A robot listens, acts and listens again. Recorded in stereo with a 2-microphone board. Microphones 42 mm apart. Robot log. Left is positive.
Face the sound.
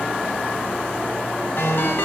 note: The ringtone: about 65° left or 115° left.
cmd yaw +65
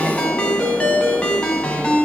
note: So it is at 30° left.
cmd yaw +30
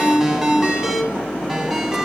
note: The ringtone is now 10° right.
cmd yaw -10
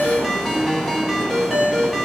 end: Facing the ringtone.